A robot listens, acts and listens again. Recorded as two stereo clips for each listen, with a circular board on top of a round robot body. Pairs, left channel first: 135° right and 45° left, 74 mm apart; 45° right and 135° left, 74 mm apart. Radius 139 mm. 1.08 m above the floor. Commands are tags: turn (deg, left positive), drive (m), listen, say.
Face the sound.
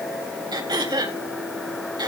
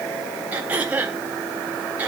<turn deg="65"/>
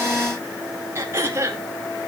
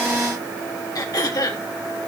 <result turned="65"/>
<turn deg="-10"/>
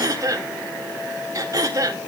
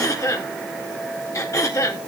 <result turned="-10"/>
<say>Found it: throat clearing, straight ahead.</say>